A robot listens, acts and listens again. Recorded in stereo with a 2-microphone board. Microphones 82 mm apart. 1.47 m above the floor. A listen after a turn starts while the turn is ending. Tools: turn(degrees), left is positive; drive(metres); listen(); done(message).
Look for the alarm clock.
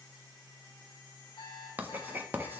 turn(degrees=65)
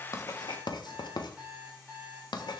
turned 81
turn(degrees=-15)
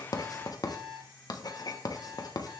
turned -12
done("Found it: an alarm clock, straight ahead.")